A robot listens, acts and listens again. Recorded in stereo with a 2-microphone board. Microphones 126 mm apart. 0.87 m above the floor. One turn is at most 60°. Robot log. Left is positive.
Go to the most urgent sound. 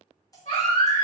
note: The baby crying: about 60° left or 120° left.
cmd yaw +60
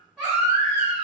cmd fwd 1.0
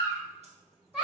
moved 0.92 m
cmd fwd 1.0
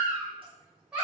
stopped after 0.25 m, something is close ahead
note: The baby crying is now 10° right.
cmd yaw -10
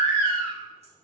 end: Arrived at the baby crying, straight ahead.